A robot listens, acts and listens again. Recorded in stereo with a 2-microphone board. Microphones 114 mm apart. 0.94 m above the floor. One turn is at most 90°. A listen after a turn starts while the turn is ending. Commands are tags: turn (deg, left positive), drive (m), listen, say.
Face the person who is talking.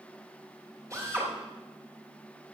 <listen/>
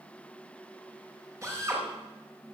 <listen/>
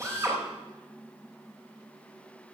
<say>I can't make out anyone speaking, only a drill.</say>